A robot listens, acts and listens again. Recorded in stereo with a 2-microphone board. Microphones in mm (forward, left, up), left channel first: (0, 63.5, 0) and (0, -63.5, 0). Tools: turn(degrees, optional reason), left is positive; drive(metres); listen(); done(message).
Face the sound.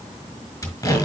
turn(degrees=25, reason="The tape being pulled: about 25° left or 155° left.")
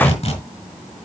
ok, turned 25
turn(degrees=130, reason="So it is at 130° left.")
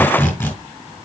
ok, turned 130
turn(degrees=20, reason="The tape being pulled is now 20° left.")
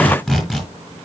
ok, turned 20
done("Facing the tape being pulled, over 4 m away.")